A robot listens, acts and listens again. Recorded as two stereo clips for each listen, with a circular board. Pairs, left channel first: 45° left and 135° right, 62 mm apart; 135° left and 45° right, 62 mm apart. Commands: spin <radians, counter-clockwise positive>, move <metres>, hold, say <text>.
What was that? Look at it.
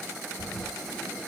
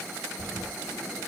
spin 2.53
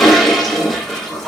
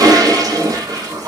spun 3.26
spin -0.70
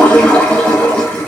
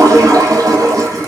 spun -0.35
spin -0.44
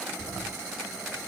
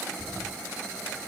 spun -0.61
spin 0.17
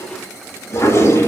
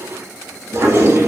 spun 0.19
say Facing the toilet flushing.